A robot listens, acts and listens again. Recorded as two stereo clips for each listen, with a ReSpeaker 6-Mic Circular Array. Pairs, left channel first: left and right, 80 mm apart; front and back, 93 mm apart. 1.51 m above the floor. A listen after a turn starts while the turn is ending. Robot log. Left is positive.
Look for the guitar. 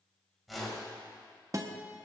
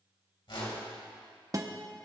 note: The guitar: 135° right.
cmd yaw -135
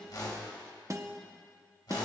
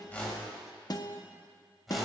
note: The guitar is now 40° right.
cmd yaw -40
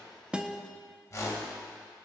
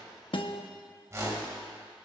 end: Facing the guitar.